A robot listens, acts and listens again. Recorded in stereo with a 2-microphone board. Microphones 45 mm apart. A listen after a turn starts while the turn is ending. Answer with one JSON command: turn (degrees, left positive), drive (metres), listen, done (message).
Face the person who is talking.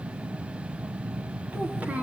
{"turn": -30}
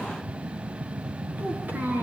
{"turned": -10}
{"turn": -40}
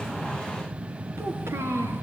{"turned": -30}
{"turn": -110}
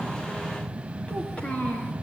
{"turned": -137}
{"turn": 25}
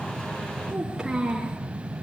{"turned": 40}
{"turn": -15}
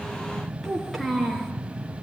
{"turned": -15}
{"done": "Facing the child speaking."}